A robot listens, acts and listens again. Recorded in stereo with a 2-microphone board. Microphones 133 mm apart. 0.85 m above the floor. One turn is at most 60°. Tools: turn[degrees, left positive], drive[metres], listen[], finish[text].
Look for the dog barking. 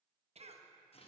Action: listen[]
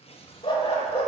Thought: The dog barking: about 50° left or 130° left.
Action: turn[50]
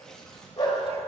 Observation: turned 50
Thought: So it is at 40° left.
Action: turn[40]
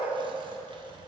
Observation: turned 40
Action: listen[]
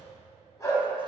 Thought: The dog barking is now 25° left.
Action: turn[25]
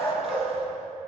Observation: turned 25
Thought: The dog barking is now 15° left.
Action: turn[15]
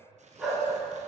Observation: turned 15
Action: finish[Found it: a dog barking, straight ahead.]